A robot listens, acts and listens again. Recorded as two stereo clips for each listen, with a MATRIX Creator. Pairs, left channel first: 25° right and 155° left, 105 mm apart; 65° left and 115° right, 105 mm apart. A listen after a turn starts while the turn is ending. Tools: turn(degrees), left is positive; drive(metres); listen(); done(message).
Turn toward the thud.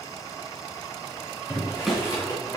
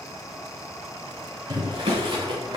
turn(degrees=-115)
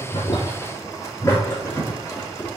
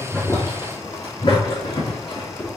done("Facing where the thud came from. I can't hear it now.")